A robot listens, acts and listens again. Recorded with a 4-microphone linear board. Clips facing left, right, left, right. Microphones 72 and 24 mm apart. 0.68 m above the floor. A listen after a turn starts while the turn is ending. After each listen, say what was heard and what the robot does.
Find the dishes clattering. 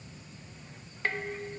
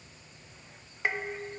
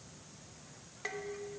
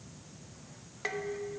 Turn 30° right.
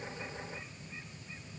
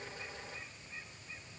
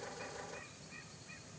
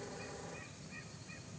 Keep listening.
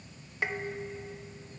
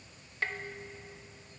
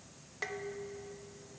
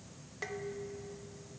So it is at 15° left. Turn 15° left.
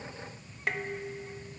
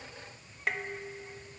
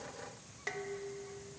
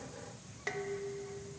Found it: dishes clattering, straight ahead.